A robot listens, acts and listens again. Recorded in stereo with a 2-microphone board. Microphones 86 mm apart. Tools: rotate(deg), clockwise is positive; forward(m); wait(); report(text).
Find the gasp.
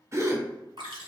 rotate(35)
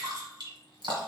wait()
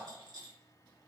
report("I heard a gasp, but can't make it out now. It was about straight ahead or 110° right.")